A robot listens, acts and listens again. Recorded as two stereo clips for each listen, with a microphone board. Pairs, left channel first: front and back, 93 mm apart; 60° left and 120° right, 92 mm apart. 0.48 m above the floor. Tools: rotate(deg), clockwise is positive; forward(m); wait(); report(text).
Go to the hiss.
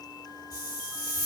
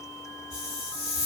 rotate(130)
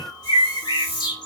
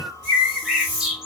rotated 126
forward(1.0)
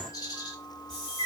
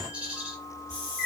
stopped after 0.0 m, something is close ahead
rotate(10)
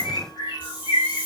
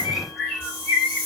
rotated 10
report("Something is in my way. I am facing the hiss but have not reached it.")